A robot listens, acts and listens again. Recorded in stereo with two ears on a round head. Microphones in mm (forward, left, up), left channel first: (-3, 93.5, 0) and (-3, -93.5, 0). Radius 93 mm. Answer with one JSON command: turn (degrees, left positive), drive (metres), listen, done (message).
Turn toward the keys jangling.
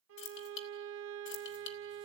{"turn": 55}
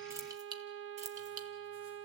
{"turn": -35}
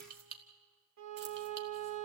{"turn": -45}
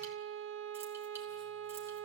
{"listen": true}
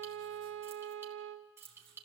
{"turn": -10}
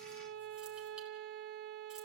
{"listen": true}
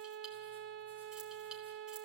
{"listen": true}
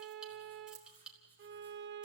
{"done": "Found it: keys jangling, straight ahead, 2 to 4 m away."}